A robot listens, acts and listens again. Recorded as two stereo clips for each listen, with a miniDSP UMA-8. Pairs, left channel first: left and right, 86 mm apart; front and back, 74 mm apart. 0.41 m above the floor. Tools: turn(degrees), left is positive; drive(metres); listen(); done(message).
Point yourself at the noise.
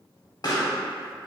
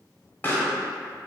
turn(degrees=60)
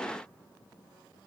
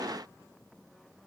done("I heard a pop from this way, but can't make it out now.")